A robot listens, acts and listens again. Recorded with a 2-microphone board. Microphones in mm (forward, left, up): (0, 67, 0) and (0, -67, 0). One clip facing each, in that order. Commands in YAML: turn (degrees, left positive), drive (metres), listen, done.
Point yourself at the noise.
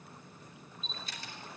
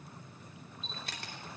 turn: -65
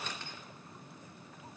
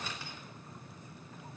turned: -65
listen: true
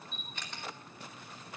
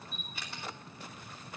turn: -10
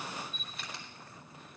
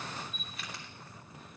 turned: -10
done: "Found it: a camera shutter, straight ahead."